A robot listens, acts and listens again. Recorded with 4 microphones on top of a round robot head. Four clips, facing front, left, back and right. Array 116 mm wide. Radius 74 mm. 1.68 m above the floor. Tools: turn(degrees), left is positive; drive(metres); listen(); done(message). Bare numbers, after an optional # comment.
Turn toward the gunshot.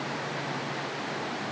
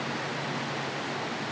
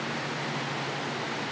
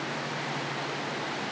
listen()
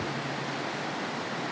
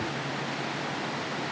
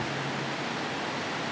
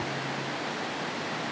listen()
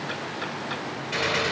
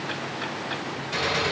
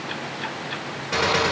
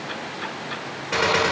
# The gunshot: 130° right.
turn(-130)
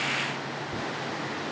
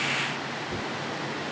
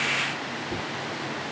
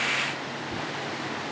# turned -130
done("I heard a gunshot from this way, but can't make it out now.")